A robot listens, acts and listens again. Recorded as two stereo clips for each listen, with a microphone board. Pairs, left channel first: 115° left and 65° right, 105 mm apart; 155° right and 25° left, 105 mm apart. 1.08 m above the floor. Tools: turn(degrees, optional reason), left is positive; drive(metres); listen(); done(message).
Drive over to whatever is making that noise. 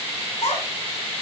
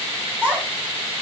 turn(degrees=100, reason="The child speaking: 100° left.")
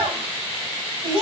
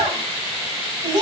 turn(degrees=-25, reason="The child speaking is now 25° right.")
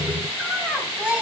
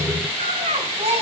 turn(degrees=10, reason="The child speaking is now 10° left.")
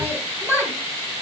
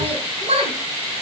drive(metres=1.0)
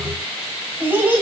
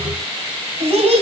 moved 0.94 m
drive(metres=1.0)
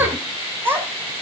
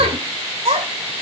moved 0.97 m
drive(metres=1.0)
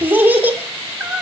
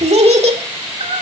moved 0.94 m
drive(metres=1.0)
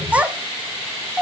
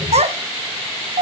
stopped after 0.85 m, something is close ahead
turn(degrees=10, reason="The child speaking is now 10° left.")
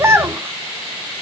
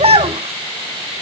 done("Arrived at the child speaking, straight ahead.")